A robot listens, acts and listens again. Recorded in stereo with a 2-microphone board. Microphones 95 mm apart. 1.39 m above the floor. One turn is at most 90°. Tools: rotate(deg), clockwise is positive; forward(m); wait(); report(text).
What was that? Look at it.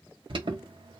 rotate(60)
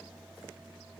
wait()
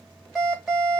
report("Facing the alarm, 1 to 2 m away.")